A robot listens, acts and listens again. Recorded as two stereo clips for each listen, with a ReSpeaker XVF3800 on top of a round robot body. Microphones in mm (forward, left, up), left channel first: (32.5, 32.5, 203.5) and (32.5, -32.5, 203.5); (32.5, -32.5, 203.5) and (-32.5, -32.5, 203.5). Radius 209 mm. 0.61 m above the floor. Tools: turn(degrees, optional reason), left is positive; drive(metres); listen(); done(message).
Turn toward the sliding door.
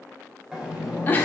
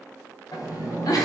turn(degrees=-10, reason="The sliding door: 10° right.")
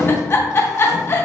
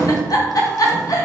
done("Found it: a sliding door, straight ahead.")